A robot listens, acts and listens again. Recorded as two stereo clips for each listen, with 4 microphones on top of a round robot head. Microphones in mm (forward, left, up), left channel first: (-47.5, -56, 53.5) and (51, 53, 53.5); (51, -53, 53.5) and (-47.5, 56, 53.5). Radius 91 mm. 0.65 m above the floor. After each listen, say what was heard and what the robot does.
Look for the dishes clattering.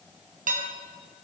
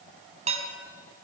The dishes clattering: 85° left. Turn 85° left.
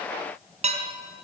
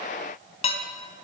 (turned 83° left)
Found it: dishes clattering, straight ahead, 2 to 4 m away.